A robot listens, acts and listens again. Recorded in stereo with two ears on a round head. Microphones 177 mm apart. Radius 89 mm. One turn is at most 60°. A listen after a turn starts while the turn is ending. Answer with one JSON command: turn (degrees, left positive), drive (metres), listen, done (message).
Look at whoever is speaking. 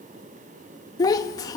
{"turn": 20}
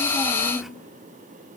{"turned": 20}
{"done": "Facing the child speaking."}